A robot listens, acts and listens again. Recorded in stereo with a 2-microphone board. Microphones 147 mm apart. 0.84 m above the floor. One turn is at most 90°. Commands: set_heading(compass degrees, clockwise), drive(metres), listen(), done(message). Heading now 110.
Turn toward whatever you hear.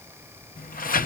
set_heading(20)
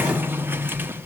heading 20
set_heading(35)
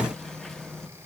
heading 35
done("Found it: a sliding door, straight ahead, under 1 m away.")